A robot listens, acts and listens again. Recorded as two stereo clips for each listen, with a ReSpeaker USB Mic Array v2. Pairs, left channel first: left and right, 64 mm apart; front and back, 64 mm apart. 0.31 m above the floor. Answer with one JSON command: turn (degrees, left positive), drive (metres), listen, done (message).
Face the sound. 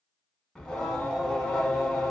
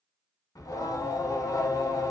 {"turn": 10}
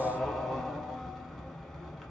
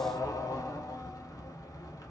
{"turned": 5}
{"done": "Facing the singing, under 1 m away."}